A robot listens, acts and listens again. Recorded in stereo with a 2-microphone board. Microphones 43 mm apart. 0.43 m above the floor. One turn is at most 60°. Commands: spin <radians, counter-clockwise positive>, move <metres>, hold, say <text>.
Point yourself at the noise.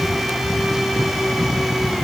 hold
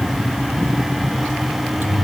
spin -0.96
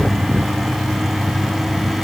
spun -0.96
hold
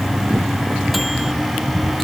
hold
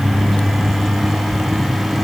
say Facing the microwave.